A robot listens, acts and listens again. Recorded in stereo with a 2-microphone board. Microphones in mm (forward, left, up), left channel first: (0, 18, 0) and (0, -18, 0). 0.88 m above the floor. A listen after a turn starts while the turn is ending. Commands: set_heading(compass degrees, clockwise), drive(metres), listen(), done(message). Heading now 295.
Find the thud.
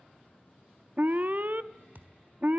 set_heading(355)
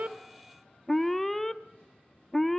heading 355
listen()
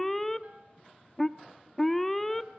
done("I heard a thud, but can't make it out now. It was about straight ahead or 60° right.")